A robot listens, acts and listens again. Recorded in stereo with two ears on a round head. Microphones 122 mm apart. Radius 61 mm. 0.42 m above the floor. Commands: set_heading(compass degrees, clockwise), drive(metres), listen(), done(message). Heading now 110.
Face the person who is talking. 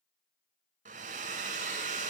listen()
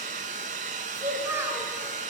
set_heading(130)
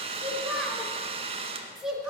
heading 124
done("Facing the child speaking, 2 to 4 m away.")